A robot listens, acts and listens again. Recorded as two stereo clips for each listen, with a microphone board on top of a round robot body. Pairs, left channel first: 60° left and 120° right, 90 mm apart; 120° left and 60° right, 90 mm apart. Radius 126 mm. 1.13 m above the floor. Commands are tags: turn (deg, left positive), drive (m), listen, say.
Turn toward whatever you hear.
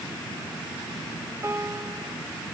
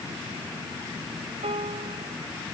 <turn deg="-60"/>
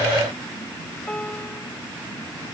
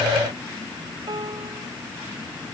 <turn deg="-20"/>
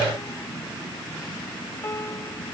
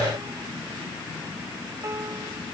<say>Facing the piano.</say>